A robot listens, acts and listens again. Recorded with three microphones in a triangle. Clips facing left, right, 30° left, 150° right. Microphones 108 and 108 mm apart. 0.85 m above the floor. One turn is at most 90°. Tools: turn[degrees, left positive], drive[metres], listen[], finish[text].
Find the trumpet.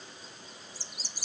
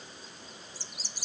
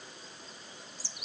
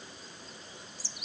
Action: listen[]
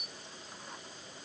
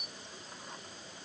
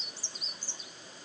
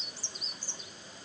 Action: listen[]
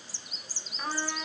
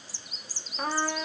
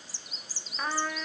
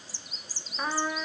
Thought: The trumpet: 75° right.
Action: turn[-75]
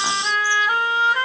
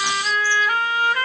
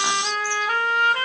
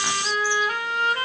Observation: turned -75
Thought: The trumpet is now 30° left.
Action: turn[30]
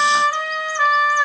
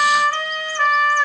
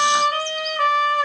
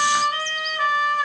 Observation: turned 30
Action: finish[Found it: a trumpet, straight ahead.]